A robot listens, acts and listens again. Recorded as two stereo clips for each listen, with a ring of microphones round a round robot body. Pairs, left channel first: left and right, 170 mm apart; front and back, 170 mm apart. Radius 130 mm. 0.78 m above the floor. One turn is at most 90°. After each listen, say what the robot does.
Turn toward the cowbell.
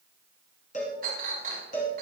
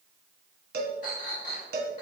Turn 90° left.
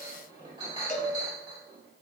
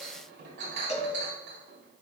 Turn 50° left.
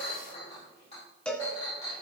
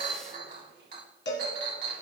Facing the cowbell.